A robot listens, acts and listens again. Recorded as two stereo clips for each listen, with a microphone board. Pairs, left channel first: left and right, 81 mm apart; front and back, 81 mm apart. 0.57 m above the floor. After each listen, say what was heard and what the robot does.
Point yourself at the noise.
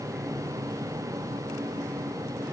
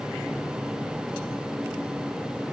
Keep listening.
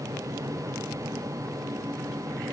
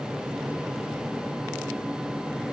Keep listening.
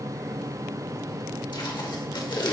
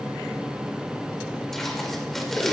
The tape being pulled: 85° left. Turn 85° left.
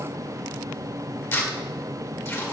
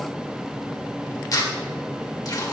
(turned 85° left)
The tape being pulled is now 35° left. Turn 35° left.
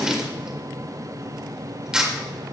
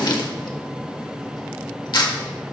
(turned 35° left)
The tape being pulled is now 10° right. Turn 10° right.
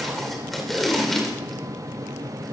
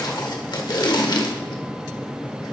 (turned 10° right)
Facing the tape being pulled.